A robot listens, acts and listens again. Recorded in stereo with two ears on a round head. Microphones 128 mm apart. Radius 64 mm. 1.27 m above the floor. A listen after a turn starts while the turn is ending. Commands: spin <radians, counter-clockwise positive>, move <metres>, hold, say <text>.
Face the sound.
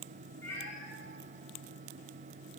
spin 0.35
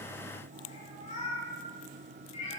spin 2.36
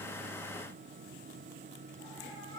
spin 0.44
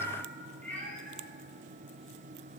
spin 0.17
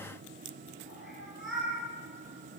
say Facing the cat meowing.